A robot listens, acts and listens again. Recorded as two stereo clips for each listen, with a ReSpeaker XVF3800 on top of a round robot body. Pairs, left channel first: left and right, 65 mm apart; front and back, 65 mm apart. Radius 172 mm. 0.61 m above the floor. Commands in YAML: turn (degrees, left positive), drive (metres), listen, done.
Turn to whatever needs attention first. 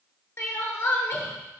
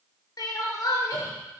turn: 40
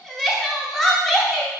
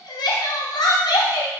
done: "Facing the crying, under 1 m away."